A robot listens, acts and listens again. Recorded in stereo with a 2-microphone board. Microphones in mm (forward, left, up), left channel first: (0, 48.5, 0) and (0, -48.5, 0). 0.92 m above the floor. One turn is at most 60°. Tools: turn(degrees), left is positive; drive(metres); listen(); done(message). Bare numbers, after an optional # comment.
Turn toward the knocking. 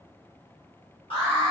listen()
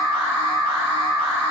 listen()
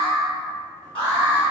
done("I can't make out knocking, only an alarm.")